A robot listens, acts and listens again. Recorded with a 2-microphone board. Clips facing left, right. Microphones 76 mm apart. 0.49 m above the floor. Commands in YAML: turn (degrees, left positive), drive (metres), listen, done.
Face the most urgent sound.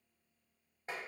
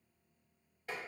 listen: true
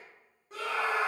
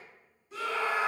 turn: 50
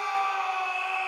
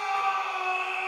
turn: 15
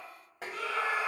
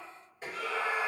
done: "Facing the scream."